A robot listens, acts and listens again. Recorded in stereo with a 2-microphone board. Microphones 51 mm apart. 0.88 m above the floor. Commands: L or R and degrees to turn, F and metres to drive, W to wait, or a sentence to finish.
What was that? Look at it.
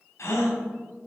L70
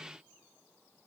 W
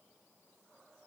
I heard a gasp, but can't make it out now. It was about straight ahead or 40° left.